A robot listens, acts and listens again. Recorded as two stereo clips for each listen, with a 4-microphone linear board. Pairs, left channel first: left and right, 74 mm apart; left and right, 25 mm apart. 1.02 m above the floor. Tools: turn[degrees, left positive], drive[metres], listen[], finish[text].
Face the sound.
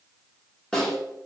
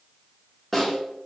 Action: turn[30]
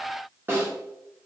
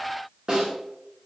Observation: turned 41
Thought: So it is at 30° right.
Action: turn[-30]
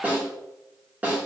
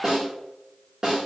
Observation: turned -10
Thought: The snare drum is now 20° right.
Action: turn[-20]
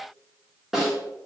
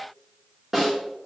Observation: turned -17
Action: finish[Facing the snare drum.]